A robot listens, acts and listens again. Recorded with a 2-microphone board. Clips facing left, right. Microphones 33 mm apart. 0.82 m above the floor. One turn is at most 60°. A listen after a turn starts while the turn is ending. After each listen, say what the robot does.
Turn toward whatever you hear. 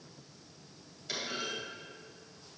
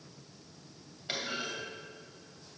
Turn 35° right.
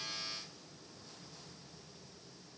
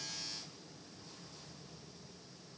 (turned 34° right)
Keep listening.
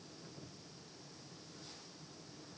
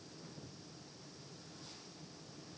I heard a clunk, but can't make it out now. It was about straight ahead or 110° right.